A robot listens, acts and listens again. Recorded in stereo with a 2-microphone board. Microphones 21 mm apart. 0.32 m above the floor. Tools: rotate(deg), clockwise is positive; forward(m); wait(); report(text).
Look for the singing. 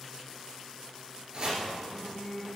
rotate(-35)
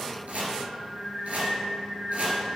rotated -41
rotate(-35)
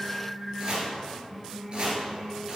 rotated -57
report("Found it: singing, straight ahead.")